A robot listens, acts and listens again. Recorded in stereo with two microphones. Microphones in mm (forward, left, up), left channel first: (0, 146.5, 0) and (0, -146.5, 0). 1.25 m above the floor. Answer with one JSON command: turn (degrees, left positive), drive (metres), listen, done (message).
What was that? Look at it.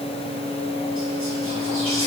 {"listen": true}
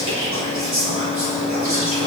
{"turn": -65}
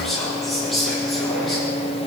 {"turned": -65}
{"done": "Found it: whispering, straight ahead."}